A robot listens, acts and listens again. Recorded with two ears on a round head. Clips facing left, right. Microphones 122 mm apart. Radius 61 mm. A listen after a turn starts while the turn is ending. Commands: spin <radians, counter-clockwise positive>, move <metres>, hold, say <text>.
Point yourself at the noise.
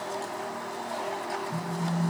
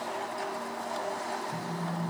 spin 0.52
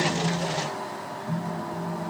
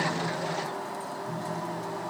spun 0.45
spin 2.53
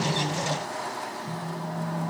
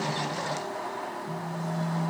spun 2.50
say Facing the phone buzzing, 1 to 2 m away.